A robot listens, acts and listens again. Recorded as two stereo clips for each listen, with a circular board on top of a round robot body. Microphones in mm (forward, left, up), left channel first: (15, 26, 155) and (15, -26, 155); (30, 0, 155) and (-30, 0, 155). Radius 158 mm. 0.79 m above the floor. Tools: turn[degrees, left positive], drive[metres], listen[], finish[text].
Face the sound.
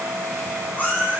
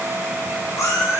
Thought: The cat meowing: 35° left.
Action: turn[35]
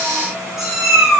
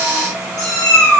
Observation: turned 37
Action: finish[Facing the cat meowing, over 4 m away.]